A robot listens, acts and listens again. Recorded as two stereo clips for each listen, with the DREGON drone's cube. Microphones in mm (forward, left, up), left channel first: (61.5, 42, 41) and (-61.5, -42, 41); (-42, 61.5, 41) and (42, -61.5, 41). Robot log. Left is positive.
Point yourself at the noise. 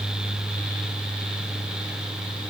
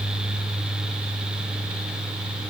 cmd idle
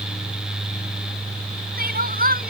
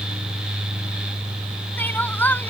note: The crying: 160° right.
cmd yaw -160
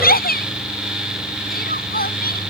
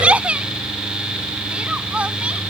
note: The crying is now 25° left.
cmd yaw +25
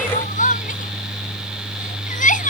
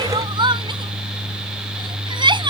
end: Found it: crying, straight ahead.